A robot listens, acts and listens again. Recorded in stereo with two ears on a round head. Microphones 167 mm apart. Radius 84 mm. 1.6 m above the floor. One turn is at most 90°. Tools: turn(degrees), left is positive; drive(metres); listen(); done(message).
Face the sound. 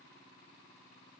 listen()
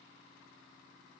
listen()
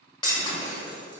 turn(degrees=25)
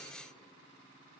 listen()
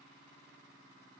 done("I heard breaking glass, but can't make it out now. It was about straight ahead or 130° left.")